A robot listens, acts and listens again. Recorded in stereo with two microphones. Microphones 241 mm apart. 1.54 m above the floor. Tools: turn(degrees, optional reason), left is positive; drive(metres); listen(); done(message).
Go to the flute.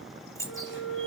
turn(degrees=60, reason="The flute: about 60° left or 120° left.")
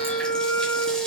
turn(degrees=10, reason="So it is at 10° left.")
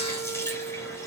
drive(metres=1.0)
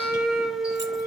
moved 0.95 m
drive(metres=1.0)
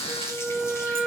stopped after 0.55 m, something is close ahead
done("Arrived at the flute, straight ahead.")